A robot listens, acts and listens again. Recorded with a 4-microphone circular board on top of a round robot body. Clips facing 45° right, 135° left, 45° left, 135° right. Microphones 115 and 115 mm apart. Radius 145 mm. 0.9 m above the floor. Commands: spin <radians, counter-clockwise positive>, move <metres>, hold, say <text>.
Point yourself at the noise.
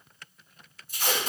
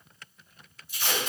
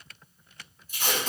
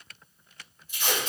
say Facing the tape being pulled.